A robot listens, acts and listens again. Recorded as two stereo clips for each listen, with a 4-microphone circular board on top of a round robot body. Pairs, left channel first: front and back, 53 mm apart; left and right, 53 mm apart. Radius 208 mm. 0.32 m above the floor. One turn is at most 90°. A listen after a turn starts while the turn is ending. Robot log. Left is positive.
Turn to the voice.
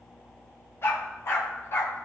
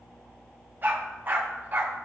cmd idle
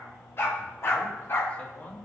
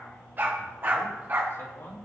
note: The man speaking: 60° left.
cmd yaw +60
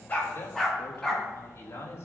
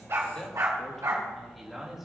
note: The man speaking is now 10° right.
cmd yaw -10
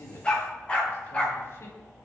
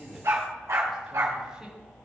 cmd idle
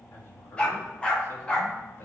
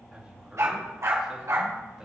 note: The man speaking is now 15° right.
cmd yaw -15
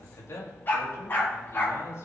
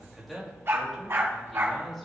end: Found it: a man speaking, straight ahead.